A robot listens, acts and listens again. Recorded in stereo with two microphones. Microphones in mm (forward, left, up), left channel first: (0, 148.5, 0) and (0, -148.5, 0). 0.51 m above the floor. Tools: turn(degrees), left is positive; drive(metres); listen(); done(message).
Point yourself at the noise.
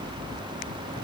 listen()
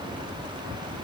listen()
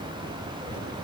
done("I can't make out anything.")